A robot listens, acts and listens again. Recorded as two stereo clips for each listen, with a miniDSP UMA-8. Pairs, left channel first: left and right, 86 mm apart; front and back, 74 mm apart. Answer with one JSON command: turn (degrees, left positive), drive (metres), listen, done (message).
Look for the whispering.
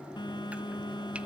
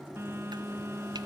{"listen": true}
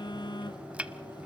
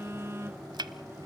{"listen": true}
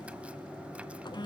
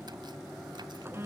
{"done": "I can't make out whispering, only a phone buzzing and chopping."}